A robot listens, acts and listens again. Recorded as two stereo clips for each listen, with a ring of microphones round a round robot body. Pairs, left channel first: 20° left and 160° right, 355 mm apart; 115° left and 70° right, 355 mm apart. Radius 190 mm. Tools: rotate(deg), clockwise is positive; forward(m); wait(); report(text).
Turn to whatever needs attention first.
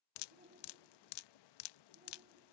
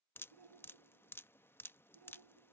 rotate(85)
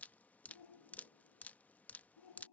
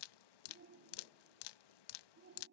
report("Facing the shout.")